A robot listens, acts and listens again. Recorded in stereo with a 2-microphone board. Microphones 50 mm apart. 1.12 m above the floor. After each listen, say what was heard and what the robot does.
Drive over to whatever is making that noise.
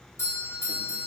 The doorbell: about 70° left or 110° left. Turn 70° left.
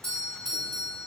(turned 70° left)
So it is at 15° left. Turn 15° left.
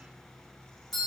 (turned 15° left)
Drive 1.0 m forward.
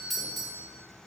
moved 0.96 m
Drive 1.0 m forward.
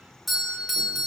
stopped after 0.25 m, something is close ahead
Arrived at the doorbell, straight ahead.